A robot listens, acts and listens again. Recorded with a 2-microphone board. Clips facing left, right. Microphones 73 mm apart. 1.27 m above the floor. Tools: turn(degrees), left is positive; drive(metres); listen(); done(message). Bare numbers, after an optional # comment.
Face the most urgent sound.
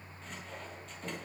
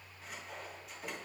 listen()
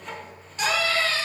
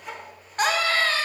# The scream: about 45° right or 135° right.
turn(-45)
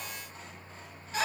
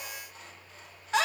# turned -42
# So it is at 90° right.
turn(-90)
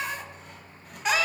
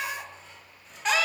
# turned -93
done("Found it: a scream, straight ahead.")